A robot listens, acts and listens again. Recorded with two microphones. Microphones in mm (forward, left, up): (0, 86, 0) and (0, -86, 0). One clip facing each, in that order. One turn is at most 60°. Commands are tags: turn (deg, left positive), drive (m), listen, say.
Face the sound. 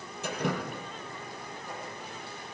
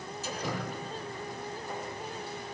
<turn deg="60"/>
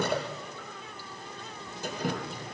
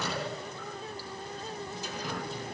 <turn deg="55"/>
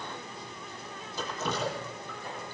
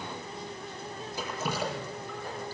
<turn deg="-10"/>
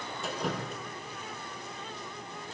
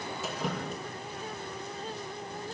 <say>Found it: dripping, straight ahead, over 4 m away.</say>